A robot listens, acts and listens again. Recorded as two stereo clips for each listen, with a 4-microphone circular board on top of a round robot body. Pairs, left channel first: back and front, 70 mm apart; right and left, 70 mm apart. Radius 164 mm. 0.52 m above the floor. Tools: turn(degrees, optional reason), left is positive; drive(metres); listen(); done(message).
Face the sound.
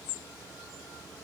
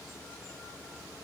listen()
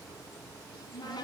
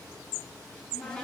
turn(degrees=-170, reason="The cupboard door: 170° right.")
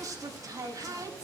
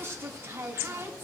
turn(degrees=35, reason="The cupboard door is now 35° left.")
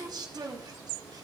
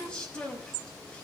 turn(degrees=-15, reason="The cupboard door is now 15° right.")
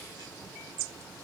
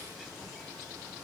listen()
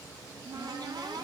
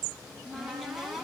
done("Found it: a cupboard door, straight ahead, over 4 m away.")